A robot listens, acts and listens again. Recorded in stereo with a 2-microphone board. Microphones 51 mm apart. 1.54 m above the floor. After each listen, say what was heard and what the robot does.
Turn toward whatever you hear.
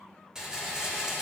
Turn 30° right.
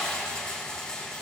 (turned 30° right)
So it is at 15° left. Turn 15° left.
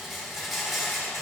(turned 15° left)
Facing the rattle, 2 to 4 m away.